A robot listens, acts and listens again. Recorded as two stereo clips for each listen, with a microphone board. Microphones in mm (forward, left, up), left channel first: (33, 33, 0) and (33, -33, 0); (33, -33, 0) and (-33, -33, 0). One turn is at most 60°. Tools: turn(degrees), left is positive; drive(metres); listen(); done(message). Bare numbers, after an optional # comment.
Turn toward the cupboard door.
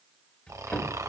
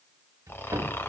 # The cupboard door: 160° left.
turn(60)
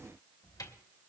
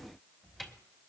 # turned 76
# The cupboard door is now 85° left.
turn(60)
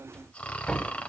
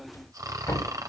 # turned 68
# The cupboard door is now 15° left.
turn(15)
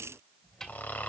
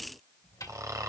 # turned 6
done("Facing the cupboard door.")